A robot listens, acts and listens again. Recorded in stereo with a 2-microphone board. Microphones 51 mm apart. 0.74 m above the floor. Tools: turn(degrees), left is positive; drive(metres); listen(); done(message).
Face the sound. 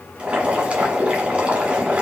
turn(degrees=-20)
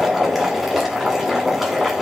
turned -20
done("Found it: boiling, straight ahead, 1 to 2 m away.")